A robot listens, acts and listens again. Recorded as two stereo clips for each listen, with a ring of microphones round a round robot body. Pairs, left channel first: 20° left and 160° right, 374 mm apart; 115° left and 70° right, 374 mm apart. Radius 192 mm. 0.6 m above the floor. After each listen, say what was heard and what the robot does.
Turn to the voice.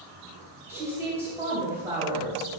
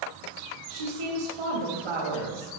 The woman speaking: 75° right. Turn 75° right.
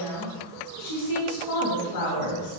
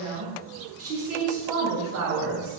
The woman speaking is now 15° right. Turn 15° right.
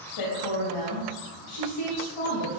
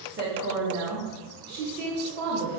Found it: a woman speaking, straight ahead, 2 to 4 m away.